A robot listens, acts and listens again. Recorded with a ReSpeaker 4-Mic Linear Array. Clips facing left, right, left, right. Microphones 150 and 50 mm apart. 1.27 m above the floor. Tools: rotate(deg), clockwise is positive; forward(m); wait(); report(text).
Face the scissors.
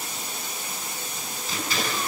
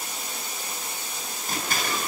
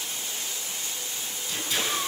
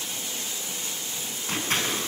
rotate(50)
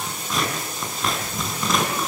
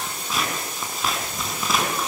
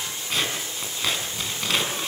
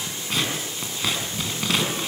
report("Facing the scissors.")